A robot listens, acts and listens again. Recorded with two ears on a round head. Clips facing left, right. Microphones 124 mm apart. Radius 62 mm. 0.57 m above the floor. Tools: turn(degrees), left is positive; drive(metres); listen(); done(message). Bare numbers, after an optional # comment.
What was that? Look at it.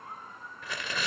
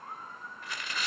# The tearing paper: about 70° left or 110° left.
turn(70)
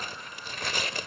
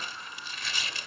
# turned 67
# So it is at 40° left.
turn(40)
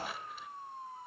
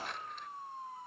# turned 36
listen()
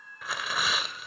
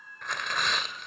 done("Facing the tearing paper, 1 to 2 m away.")